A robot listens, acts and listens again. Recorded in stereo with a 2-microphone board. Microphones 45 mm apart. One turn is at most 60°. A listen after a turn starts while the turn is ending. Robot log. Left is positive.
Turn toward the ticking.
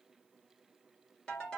cmd idle
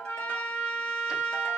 cmd idle
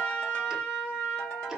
end: I can't make out ticking to turn to.